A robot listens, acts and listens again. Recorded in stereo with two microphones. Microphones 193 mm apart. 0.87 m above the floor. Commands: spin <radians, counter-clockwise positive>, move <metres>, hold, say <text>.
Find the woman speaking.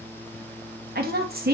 spin -0.96
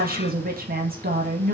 spin -1.05
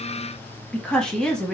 say Facing the woman speaking.